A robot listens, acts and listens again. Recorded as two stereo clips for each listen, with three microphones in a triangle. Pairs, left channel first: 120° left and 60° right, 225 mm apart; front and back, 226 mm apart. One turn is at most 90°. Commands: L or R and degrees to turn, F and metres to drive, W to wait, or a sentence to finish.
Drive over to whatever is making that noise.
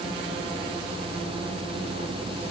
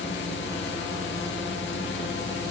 W
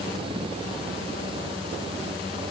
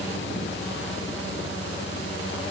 W
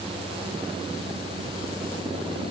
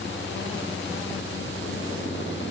I can't make out anything.